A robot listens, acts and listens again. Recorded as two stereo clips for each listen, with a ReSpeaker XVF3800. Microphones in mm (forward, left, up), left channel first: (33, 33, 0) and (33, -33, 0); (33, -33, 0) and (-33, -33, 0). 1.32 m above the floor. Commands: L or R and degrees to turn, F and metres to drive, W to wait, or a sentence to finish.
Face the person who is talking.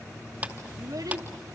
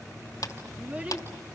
R110
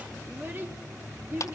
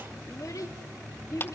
R30
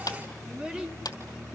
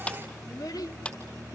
R15
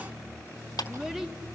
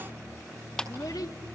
Facing the child speaking.